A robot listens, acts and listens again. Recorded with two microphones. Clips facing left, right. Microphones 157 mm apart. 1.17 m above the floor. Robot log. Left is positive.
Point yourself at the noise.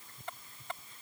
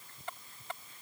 cmd idle
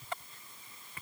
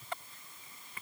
cmd idle
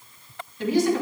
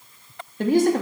note: The woman speaking: about 50° right or 130° right.
cmd yaw -50
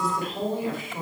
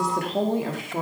note: So it is at 80° right.
cmd yaw -80
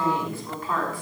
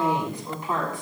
note: The woman speaking is now 20° right.
cmd yaw -20
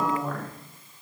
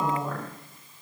end: Found it: a woman speaking, straight ahead, 2 to 4 m away.